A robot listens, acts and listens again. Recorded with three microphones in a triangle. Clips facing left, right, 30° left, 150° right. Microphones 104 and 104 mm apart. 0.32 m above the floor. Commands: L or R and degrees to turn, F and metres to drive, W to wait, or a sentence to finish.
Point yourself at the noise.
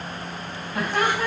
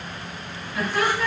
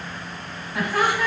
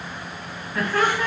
L105
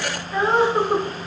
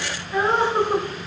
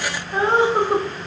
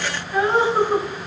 L10
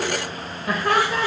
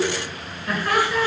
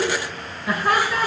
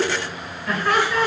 L100
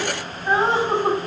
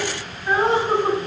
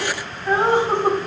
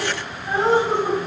L25
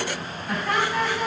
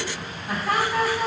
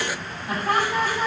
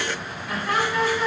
R15
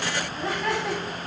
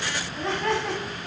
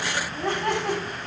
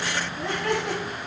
Found it: laughter, straight ahead.